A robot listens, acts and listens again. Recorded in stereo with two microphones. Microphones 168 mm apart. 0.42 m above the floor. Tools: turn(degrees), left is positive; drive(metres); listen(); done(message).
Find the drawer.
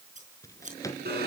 turn(degrees=20)
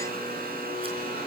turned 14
listen()
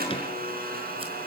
listen()
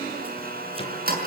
done("I heard a drawer, but can't make it out now. It was about 5° left or 145° left.")